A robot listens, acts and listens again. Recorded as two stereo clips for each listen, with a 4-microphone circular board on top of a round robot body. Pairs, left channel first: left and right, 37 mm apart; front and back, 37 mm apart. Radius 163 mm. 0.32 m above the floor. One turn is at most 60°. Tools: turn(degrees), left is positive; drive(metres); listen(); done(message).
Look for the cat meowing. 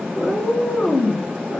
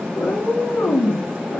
turn(degrees=10)
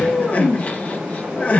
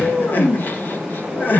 turn(degrees=15)
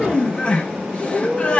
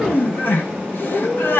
turn(degrees=20)
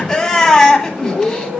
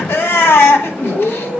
turn(degrees=10)
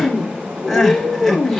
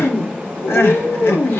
done("Facing the cat meowing, over 4 m away.")